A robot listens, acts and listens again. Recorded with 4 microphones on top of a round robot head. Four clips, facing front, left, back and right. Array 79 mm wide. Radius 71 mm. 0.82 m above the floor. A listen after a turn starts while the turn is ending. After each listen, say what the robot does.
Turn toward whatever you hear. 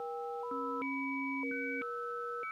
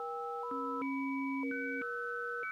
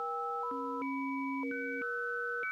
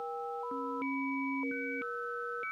Keep listening.
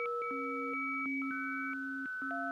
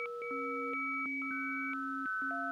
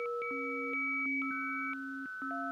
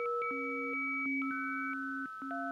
Keep listening.
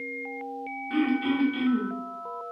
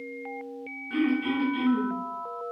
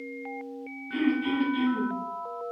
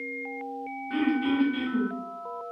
Turn 25° right.
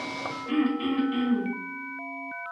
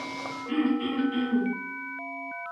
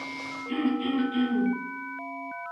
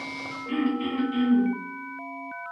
Found it: throat clearing, straight ahead, 2 to 4 m away.